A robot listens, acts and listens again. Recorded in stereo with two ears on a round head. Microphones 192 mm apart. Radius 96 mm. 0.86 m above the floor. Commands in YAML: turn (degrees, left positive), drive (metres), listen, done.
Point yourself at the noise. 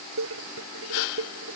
turn: -70
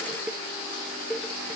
done: "Found it: dishes clattering, straight ahead."